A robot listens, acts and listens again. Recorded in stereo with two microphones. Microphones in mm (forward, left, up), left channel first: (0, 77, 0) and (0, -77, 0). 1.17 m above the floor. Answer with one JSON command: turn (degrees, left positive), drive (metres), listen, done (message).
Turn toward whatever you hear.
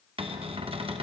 {"turn": -35}
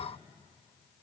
{"listen": true}
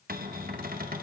{"turn": -105}
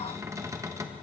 {"turn": -20}
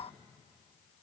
{"listen": true}
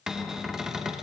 {"done": "Facing the cupboard door, under 1 m away."}